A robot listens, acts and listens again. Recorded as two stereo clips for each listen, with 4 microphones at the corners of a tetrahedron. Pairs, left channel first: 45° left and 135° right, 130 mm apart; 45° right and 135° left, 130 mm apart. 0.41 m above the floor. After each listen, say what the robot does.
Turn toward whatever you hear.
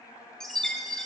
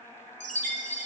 Turn 130° left.
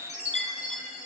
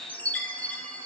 Turn 30° left.
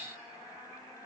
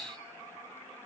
Keep listening.
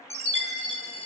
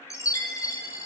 Turn 15° left.
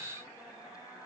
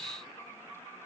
Keep listening.
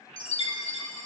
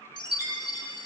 Facing the chime.